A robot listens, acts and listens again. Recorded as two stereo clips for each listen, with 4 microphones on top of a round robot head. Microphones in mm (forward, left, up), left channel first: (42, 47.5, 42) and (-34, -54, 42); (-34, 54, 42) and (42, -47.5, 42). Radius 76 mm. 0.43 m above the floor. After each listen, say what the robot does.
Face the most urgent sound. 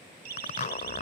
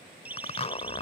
Turn 130° right.
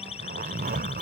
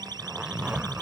Turn 10° left.
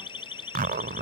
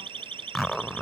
Facing the siren.